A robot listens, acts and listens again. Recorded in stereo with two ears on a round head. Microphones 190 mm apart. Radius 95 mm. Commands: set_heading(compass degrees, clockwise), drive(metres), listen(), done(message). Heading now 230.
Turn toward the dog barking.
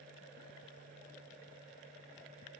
listen()
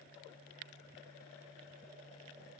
listen()
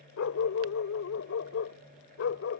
set_heading(165)
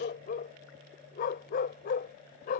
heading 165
set_heading(125)
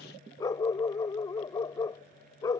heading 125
set_heading(110)
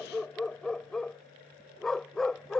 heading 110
done("Found it: a dog barking, straight ahead.")